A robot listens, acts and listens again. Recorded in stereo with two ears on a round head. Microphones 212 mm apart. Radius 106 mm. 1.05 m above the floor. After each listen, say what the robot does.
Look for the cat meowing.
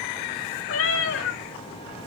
Turn 60° left.
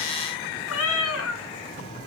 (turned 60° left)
Turn 65° left.
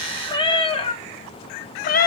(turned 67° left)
Turn 40° left.
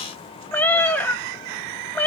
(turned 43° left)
Facing the cat meowing.